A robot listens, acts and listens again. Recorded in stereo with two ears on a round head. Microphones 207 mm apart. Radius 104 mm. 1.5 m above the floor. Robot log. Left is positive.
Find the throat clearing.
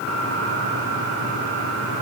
cmd idle
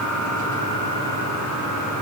cmd idle
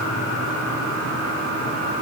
end: I can't make out throat clearing.